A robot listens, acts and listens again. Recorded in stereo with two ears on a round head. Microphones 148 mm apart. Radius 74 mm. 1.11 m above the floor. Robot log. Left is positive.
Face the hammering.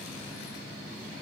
cmd idle
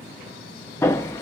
note: The hammering: about 15° left or 165° left.
cmd yaw +15
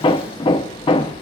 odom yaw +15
note: So it is at 150° left.
cmd yaw +150
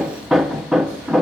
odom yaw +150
end: Facing the hammering.